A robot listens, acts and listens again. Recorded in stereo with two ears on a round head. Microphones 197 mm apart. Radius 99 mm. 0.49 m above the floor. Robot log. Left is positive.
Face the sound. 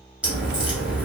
cmd yaw -30
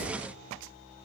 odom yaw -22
cmd idle
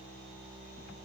end: I heard a crack, but can't make it out now. It was about 15° left or 155° right.